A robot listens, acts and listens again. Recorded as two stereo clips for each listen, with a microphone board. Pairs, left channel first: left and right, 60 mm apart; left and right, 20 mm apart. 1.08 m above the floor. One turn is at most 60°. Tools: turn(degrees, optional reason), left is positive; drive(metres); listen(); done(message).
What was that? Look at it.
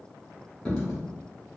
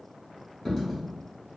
turn(degrees=30)
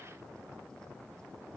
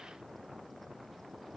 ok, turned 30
listen()
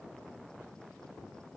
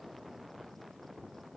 done("I heard a dropped coin, but can't make it out now. It was about 15° right or 135° left.")